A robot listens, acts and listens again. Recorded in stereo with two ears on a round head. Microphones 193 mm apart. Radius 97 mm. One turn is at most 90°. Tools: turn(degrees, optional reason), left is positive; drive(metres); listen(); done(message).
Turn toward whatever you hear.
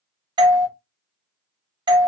turn(degrees=-20, reason="The doorbell: about 20° right or 160° right.")
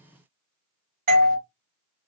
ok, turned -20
turn(degrees=-90, reason="So it is at 140° right.")
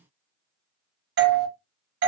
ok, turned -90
turn(degrees=-50, reason="The doorbell is now 50° right.")
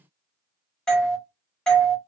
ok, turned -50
done("Found it: a doorbell, straight ahead, under 1 m away.")